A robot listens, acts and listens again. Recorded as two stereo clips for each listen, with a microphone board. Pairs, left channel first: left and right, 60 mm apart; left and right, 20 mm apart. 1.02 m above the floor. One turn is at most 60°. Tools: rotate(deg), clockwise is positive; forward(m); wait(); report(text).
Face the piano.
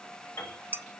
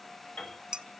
rotate(-45)
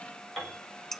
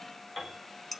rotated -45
report("Facing the piano.")